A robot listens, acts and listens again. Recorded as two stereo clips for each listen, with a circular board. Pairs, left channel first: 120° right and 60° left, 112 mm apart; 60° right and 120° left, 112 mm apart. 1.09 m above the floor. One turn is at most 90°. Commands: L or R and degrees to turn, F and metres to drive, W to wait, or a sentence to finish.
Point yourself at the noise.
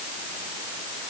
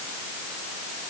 W
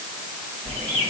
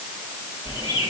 L90
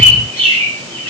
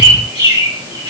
L80
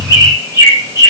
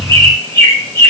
Found it: a bird, straight ahead, 2 to 4 m away.